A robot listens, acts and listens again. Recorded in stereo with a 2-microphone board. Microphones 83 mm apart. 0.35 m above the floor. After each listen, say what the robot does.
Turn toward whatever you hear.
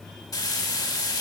Turn 50° left.
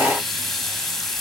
Found it: frying, straight ahead.